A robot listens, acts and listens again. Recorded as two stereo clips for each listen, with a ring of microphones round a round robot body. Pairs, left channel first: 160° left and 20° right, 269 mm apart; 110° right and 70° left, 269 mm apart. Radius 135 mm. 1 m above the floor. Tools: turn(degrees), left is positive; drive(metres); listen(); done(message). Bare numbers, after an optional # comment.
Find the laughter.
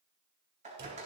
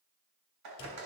listen()
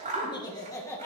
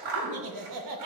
# The laughter: 75° left.
turn(75)
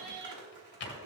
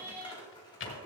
# The laughter is now 20° right.
turn(-20)
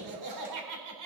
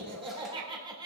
done("Found it: laughter, straight ahead, 2 to 4 m away.")